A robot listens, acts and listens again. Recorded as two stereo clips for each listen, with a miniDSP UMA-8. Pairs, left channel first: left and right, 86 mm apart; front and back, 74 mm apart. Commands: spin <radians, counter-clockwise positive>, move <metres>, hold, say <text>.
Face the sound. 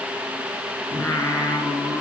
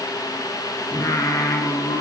spin 0.44
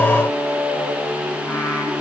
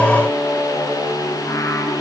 spin 0.26
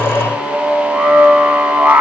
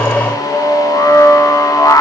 spin -0.26
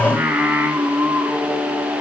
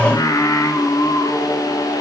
spin -0.35
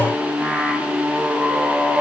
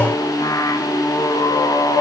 say Found it: singing, straight ahead, 2 to 4 m away.